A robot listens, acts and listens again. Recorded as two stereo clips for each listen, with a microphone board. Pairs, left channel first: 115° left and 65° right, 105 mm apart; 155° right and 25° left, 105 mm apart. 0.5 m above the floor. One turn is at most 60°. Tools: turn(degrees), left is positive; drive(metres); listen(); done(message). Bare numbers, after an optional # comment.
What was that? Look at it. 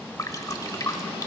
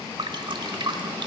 # The dripping: 60° left.
turn(60)
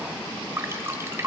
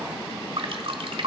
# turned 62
done("Found it: dripping, straight ahead.")